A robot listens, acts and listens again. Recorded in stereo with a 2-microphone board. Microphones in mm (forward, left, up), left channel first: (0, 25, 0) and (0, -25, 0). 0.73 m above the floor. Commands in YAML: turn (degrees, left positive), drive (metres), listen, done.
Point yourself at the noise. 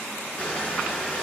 turn: 25
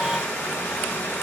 turn: 130
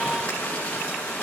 turn: 25
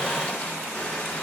listen: true
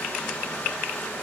turn: 20
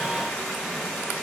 listen: true
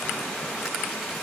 listen: true
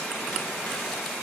done: "Facing where the crushing came from. I can't hear it now."